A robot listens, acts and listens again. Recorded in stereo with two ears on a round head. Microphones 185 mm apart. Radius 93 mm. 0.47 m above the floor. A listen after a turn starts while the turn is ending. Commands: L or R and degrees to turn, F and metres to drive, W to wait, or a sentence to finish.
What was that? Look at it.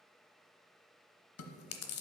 L70
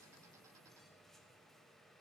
W
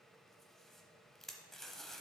Facing the chewing.